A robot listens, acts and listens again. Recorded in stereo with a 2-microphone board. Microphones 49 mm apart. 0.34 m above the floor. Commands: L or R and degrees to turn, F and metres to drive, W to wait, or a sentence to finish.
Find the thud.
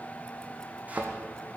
R30
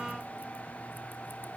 W
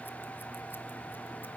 I heard a thud, but can't make it out now. It was about straight ahead or 120° right.